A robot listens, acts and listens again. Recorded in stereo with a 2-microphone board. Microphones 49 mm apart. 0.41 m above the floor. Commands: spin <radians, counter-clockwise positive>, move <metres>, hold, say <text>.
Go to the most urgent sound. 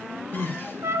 spin -0.96
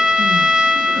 hold
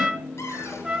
hold
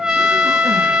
say I heard crying, but can't make it out now. It was about straight ahead or 70° right. I did not reach it.